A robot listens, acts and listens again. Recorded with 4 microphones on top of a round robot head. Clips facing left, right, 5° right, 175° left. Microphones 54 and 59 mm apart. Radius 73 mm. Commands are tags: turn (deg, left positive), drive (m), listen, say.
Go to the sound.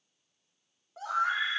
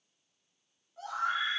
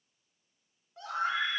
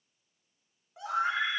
<turn deg="100"/>
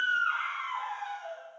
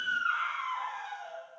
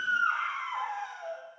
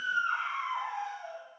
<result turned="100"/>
<turn deg="10"/>
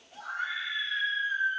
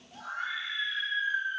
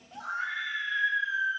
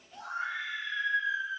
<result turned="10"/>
<drive m="1.0"/>
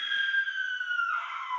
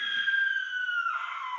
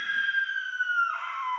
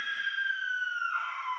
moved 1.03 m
<drive m="1.0"/>
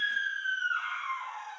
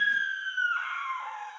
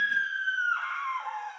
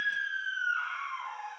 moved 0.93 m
<turn deg="-15"/>
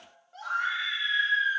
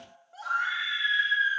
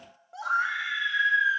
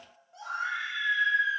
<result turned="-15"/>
<drive m="1.0"/>
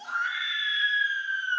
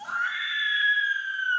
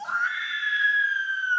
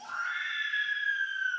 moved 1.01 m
<turn deg="-10"/>
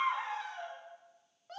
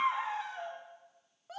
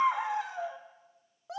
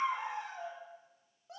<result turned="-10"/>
<drive m="1.0"/>
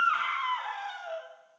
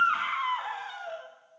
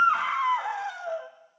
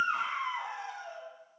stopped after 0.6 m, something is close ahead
<say>I am next to the scream.</say>